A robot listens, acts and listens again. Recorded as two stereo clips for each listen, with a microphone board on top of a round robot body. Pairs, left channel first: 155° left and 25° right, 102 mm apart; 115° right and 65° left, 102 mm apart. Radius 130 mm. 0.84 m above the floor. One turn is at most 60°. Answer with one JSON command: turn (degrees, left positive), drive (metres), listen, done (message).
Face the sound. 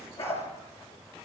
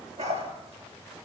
{"turn": 60}
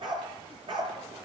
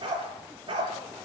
{"turn": 20}
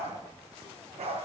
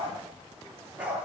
{"turn": -10}
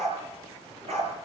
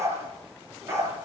{"done": "Facing the dog barking, over 4 m away."}